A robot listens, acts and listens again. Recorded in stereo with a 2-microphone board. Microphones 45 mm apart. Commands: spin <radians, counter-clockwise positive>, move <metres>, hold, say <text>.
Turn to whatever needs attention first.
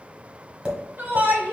spin -0.96
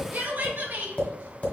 spin -1.05
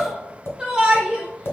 spin -0.35
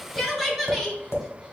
say Facing the shout.